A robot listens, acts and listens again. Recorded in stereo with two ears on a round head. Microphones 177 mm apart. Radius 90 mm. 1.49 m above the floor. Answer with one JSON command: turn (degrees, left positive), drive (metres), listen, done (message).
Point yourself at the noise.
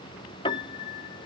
{"turn": 25}
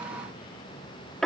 {"done": "Found it: a piano, straight ahead."}